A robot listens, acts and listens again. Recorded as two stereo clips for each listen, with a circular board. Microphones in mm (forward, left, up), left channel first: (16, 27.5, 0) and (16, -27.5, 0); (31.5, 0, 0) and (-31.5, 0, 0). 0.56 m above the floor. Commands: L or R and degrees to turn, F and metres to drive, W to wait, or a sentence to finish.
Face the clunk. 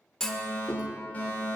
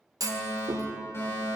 L170
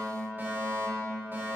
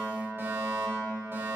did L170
Facing where the clunk came from. I can't hear it now.